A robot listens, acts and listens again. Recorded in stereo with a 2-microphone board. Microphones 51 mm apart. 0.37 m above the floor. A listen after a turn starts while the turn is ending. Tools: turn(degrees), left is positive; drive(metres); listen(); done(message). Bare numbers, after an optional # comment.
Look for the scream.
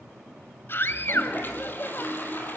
# The scream: about 50° left or 130° left.
turn(50)
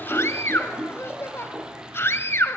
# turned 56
# So it is at 65° left.
turn(65)
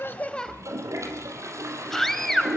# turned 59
# The scream is now 10° left.
turn(10)
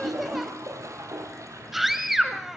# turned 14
done("Found it: a scream, straight ahead.")